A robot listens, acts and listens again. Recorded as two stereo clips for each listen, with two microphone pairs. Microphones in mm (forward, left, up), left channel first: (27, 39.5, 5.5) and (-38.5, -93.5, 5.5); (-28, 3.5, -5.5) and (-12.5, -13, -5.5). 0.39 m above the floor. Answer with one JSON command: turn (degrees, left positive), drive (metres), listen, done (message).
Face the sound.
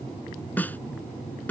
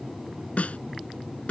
{"turn": 140}
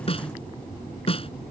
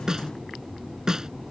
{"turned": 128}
{"turn": 15}
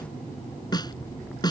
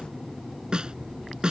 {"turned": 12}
{"done": "Found it: a snare drum, straight ahead."}